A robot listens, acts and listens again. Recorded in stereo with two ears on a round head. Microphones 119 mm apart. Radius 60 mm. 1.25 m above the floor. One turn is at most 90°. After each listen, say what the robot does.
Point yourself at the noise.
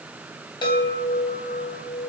Turn 40° left.
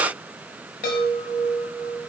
Turn 90° left.
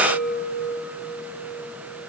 Turn 20° left.
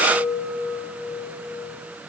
Facing the chime, over 4 m away.